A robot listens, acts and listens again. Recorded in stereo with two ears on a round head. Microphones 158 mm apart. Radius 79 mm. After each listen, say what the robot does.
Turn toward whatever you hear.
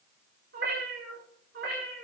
Turn 60° right.
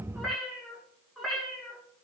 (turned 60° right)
Found it: a cat meowing, straight ahead, over 4 m away.